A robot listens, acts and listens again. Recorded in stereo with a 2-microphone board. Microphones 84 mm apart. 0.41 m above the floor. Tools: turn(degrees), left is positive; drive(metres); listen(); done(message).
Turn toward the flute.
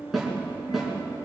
listen()
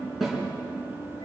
listen()
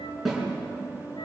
done("I can't make out a flute to turn to.")